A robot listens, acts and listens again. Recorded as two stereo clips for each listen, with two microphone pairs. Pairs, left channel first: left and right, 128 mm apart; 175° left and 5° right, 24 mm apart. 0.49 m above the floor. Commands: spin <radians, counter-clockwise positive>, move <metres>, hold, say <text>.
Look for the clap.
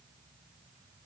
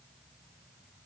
hold
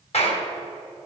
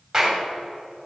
spin 1.13
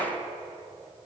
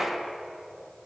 hold
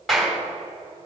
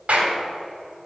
say Facing the clap.